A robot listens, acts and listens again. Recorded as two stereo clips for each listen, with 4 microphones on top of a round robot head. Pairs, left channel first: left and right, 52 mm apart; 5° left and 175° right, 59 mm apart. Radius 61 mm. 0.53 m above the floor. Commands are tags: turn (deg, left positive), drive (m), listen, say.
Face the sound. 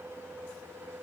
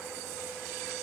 <listen/>
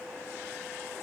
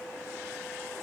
<listen/>
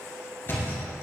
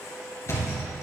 <turn deg="45"/>
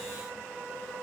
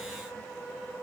<say>I heard a thud from this way, but can't make it out now.</say>